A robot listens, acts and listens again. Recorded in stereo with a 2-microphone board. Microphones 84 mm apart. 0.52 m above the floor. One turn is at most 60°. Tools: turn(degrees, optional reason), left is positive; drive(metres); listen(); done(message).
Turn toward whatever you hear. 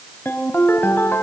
turn(degrees=25, reason="The ringtone: about 25° left or 155° left.")
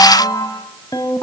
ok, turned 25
turn(degrees=60, reason="So it is at 130° left.")
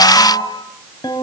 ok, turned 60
turn(degrees=60, reason="The ringtone is now 60° left.")
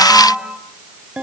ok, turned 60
turn(degrees=-10, reason="The ringtone is now 10° right.")
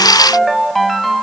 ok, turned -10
done("Found it: a ringtone, straight ahead, 2 to 4 m away.")